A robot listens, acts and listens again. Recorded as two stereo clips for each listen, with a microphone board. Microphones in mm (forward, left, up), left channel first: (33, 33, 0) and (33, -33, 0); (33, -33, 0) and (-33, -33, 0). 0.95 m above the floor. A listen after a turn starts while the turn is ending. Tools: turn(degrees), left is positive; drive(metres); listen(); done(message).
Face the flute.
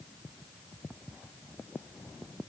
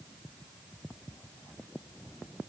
listen()
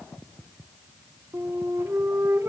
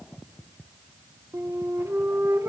turn(degrees=-135)
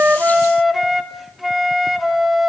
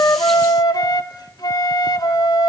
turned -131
done("Facing the flute.")